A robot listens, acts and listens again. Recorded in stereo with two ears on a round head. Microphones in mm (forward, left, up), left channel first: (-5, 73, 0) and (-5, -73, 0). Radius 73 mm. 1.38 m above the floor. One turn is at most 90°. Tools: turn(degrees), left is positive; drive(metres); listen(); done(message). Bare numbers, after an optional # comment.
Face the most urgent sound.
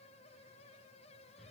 listen()
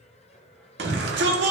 # The shout: about 70° right or 110° right.
turn(-70)
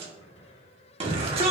# So it is at 35° right.
turn(-35)
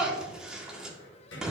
done("Found it: a shout, straight ahead.")